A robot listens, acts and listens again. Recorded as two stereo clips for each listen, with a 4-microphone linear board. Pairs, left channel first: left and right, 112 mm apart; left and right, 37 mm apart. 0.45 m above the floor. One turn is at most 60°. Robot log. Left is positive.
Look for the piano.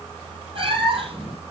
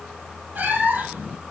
cmd idle
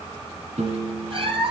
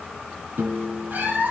cmd yaw -60
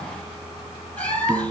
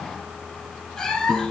note: So it is at 30° right.
cmd yaw -30
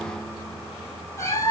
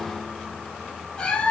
cmd idle
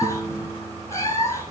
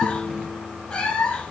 note: The piano is now 15° right.
cmd yaw -15
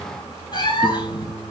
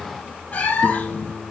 end: Found it: a piano, straight ahead.